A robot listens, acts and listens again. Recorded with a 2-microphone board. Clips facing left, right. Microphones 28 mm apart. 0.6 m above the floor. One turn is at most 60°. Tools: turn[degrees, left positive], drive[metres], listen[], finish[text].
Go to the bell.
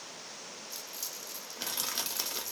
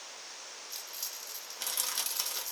Action: listen[]
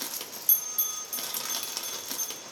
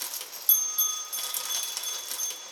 Thought: The bell: about 45° right or 135° right.
Action: turn[-45]
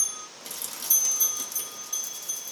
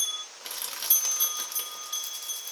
Thought: So it is at 80° right.
Action: turn[-60]
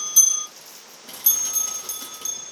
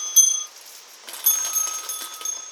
Thought: The bell is now 20° right.
Action: turn[-20]
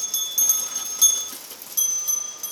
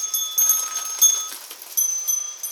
Action: drive[1.0]
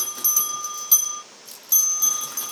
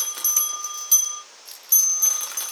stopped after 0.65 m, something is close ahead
Action: finish[I am next to the bell.]